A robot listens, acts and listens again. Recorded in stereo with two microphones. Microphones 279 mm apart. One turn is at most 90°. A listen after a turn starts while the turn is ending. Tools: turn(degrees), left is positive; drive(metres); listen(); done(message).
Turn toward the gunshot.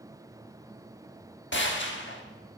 turn(degrees=45)
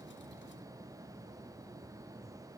listen()
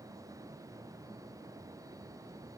done("I heard a gunshot, but can't make it out now. It was about straight ahead or 90° left.")